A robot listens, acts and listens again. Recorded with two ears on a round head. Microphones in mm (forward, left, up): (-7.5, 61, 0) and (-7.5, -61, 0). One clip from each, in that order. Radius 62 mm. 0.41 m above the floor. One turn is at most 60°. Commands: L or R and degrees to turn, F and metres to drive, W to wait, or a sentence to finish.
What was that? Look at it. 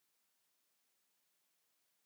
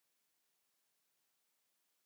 W
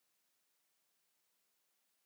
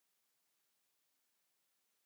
W
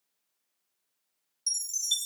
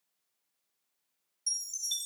L30
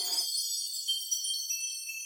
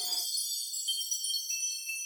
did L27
R15
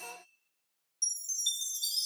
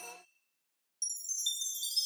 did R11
Facing the chime, 1 to 2 m away.